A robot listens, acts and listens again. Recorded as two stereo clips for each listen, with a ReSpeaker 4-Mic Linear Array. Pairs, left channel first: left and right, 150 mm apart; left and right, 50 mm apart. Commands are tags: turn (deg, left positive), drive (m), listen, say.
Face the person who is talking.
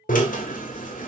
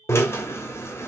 <listen/>
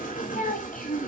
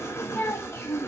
<turn deg="70"/>
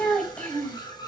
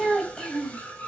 <turn deg="10"/>
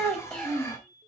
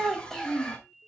<turn deg="10"/>
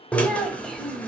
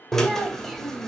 <listen/>
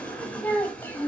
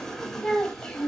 <turn deg="15"/>
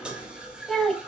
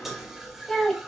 <say>Facing the child speaking.</say>